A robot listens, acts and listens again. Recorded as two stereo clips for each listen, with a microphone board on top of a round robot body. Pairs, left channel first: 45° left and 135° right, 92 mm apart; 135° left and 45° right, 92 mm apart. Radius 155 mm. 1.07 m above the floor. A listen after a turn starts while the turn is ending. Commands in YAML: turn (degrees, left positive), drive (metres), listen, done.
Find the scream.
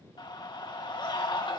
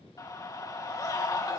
turn: 85
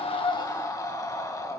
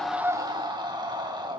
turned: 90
done: "Found it: a scream, straight ahead, 2 to 4 m away."